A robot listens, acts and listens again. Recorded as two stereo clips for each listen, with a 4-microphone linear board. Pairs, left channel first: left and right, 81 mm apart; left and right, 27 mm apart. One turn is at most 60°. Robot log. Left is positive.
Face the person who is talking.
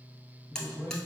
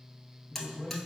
note: The man speaking: about 35° right or 145° right.
cmd yaw -35
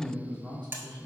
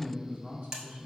note: So it is at 100° right.
cmd yaw -60
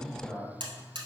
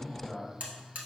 note: The man speaking is now 35° right.
cmd yaw -35
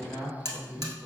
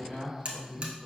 end: Found it: a man speaking, straight ahead, 1 to 2 m away.